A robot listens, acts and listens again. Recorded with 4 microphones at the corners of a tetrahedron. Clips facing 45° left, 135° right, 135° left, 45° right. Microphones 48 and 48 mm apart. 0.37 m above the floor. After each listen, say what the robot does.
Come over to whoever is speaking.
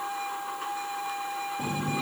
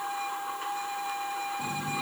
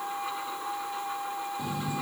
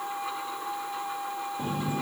Keep listening.
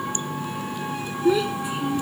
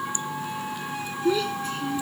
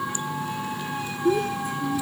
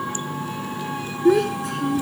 Turn 25° right.
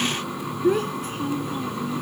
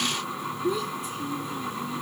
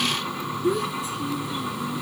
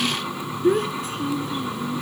Drive 1.0 m forward.
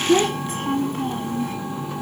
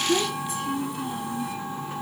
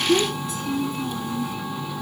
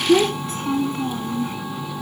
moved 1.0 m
Drive 1.0 m forward.
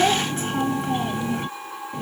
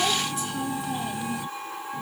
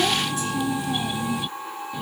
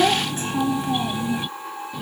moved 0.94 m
Drive 1.0 m forward.
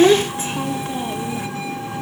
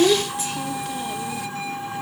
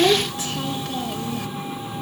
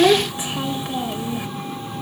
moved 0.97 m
Turn 15° left.
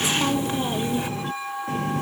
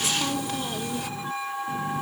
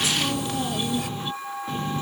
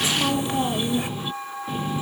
Drive 1.0 m forward.
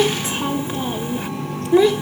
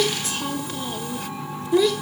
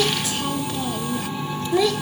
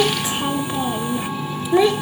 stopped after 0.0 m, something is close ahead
I am next to the child speaking.